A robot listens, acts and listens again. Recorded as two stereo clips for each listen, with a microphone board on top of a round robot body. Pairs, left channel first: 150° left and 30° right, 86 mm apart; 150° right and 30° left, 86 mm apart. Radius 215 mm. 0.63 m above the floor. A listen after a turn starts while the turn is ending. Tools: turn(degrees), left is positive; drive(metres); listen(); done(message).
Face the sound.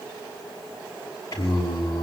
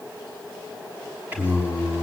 turn(degrees=100)
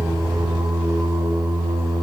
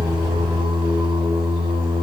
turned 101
turn(degrees=10)
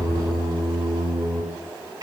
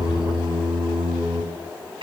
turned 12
done("Facing the singing.")